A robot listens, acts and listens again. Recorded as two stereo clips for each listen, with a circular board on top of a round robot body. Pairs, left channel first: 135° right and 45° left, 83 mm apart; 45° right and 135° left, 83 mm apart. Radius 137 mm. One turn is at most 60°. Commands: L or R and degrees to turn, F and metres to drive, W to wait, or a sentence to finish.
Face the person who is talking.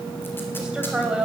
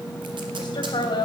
R35
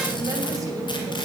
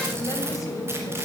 W
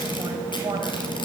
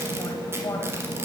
W
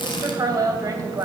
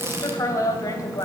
Found it: a woman speaking, straight ahead, 2 to 4 m away.